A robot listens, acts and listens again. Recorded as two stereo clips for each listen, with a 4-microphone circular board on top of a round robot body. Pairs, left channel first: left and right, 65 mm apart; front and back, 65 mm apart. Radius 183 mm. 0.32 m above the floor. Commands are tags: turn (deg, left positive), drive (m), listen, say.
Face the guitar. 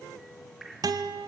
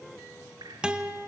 <turn deg="-105"/>
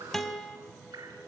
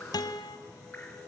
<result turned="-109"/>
<say>Found it: a guitar, straight ahead.</say>